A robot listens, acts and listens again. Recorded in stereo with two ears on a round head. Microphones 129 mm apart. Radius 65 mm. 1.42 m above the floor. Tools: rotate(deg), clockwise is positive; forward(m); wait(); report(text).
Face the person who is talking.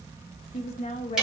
rotate(-50)
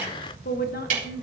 rotate(-60)
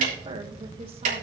wait()
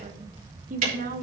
rotate(60)
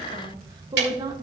rotate(25)
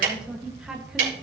report("Found it: a woman speaking, straight ahead.")